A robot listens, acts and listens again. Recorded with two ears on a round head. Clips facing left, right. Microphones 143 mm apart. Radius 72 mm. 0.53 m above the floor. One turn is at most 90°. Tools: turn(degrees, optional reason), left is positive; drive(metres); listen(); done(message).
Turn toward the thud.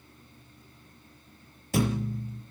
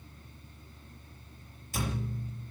turn(degrees=55, reason="The thud: about 55° left or 125° left.")
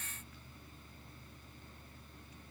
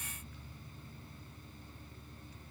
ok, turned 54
listen()
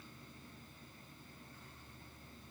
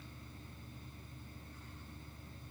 done("I heard a thud, but can't make it out now. It was about straight ahead or 70° left.")